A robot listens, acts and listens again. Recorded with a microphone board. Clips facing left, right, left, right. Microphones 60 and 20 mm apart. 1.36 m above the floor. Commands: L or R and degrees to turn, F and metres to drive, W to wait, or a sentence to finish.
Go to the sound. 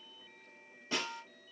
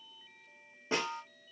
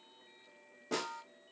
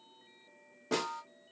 R30
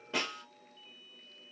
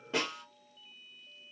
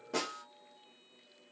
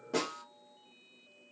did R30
F1.0
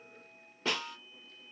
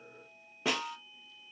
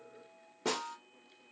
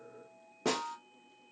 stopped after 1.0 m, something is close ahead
I am next to the snare drum.